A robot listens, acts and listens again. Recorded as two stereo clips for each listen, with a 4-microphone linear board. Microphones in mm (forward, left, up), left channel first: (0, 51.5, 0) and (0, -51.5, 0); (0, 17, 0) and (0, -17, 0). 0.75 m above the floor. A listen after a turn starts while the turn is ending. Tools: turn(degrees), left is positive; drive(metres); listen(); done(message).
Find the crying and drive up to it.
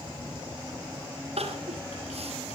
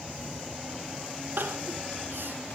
turn(degrees=-90)
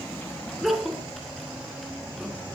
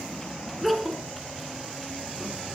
drive(metres=1.0)
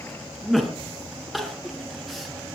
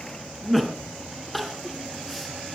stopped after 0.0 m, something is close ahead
done("Something is in my way. I am facing the crying but have not reached it.")